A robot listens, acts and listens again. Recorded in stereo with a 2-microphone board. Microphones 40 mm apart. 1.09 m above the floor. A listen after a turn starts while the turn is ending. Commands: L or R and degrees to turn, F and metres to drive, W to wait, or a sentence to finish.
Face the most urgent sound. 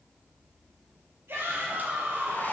R90
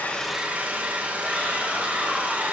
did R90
W
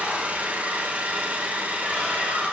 Facing the shout.